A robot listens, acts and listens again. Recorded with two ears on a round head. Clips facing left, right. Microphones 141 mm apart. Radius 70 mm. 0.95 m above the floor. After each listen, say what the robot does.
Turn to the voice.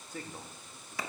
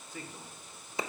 Turn 35° left.
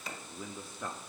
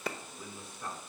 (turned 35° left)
Turn 105° left.
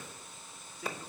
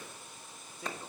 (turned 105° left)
Turn 25° right.
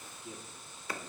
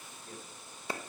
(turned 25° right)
Turn 10° left.
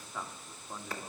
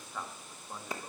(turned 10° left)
Facing the man speaking, 1 to 2 m away.